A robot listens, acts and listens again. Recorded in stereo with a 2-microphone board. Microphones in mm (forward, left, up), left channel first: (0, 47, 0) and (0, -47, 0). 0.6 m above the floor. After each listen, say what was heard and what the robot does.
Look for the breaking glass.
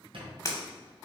The breaking glass: about 35° left or 145° left. Turn 35° left.
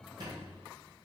Keep listening.
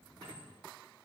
I heard breaking glass, but can't make it out now. It was about straight ahead or 110° left.